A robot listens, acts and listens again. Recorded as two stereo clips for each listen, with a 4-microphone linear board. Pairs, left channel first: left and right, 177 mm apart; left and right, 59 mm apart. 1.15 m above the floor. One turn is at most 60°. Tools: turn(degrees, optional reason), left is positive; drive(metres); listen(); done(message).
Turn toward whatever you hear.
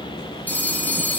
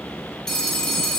turn(degrees=30)
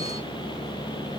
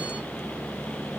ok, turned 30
listen()
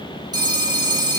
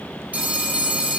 turn(degrees=-25, reason="So it is at 25° right.")
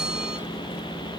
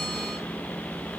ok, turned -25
listen()
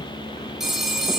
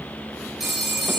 done("Facing the phone ringing, 2 to 4 m away.")